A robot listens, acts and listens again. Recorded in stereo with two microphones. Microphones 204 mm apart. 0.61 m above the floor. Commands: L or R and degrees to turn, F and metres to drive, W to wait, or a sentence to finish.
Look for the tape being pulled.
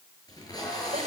L20
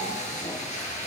L145
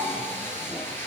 L10
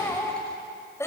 W
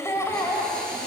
Facing the tape being pulled, over 4 m away.